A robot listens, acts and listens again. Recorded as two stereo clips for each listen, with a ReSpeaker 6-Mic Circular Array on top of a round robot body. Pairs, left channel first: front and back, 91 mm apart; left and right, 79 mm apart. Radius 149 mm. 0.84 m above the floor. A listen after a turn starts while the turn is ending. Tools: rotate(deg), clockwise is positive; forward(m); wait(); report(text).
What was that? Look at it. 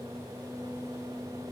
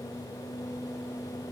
wait()
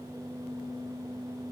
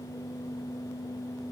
wait()
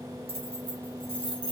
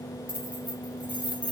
rotate(165)
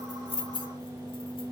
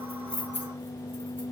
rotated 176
rotate(-25)
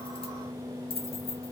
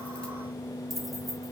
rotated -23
report("Facing the keys jangling.")